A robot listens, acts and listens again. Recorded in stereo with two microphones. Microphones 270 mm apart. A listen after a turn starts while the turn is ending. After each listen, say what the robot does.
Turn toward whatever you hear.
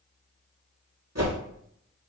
Turn 70° right.
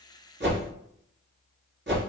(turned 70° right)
Turn 45° right.
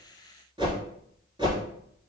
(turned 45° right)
Turn 15° right.
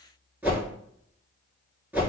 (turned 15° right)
Facing the whoosh.